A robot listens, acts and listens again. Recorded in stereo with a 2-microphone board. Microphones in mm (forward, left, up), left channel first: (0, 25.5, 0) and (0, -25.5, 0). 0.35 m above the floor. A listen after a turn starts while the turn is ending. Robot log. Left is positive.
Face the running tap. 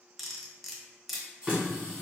note: The running tap: about 25° right or 155° right.
cmd yaw -25
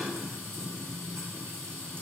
note: So it is at 130° right.
cmd yaw -130
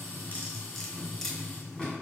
note: The running tap is now 15° left.
cmd yaw +15
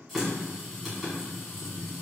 end: Facing the running tap.